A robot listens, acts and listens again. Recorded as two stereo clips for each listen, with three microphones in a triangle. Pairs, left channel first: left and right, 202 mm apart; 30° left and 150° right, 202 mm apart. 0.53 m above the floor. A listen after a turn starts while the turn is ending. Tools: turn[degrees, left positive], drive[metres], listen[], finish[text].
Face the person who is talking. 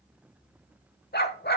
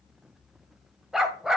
Action: listen[]
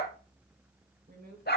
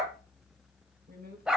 Thought: The woman speaking: 120° right.
Action: turn[-120]
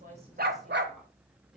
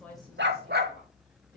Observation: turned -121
Action: finish[Facing the woman speaking, 2 to 4 m away.]